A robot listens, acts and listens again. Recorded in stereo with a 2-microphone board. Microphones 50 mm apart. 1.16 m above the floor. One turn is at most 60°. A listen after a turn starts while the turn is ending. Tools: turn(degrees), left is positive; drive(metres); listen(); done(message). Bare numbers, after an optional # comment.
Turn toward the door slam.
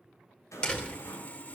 # The door slam: about 20° left or 160° left.
turn(20)
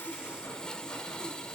listen()
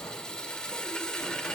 done("I heard a door slam, but can't make it out now. It was about straight ahead or 140° left.")